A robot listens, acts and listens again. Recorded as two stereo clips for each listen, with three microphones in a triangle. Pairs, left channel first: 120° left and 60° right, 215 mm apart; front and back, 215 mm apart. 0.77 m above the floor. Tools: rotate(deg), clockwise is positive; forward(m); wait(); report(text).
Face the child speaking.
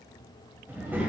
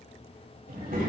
rotate(140)
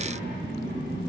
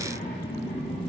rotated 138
rotate(35)
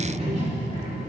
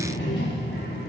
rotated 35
rotate(10)
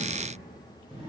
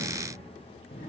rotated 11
report("Facing the child speaking, over 4 m away.")